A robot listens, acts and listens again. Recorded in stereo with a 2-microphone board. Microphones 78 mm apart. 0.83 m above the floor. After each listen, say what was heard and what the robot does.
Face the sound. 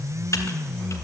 The typing on a keyboard: about 45° left or 135° left. Turn 45° left.
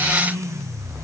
Keep listening.
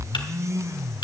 So it is at 90° left. Turn 90° left.
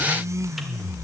Keep listening.
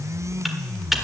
Found it: typing on a keyboard, straight ahead.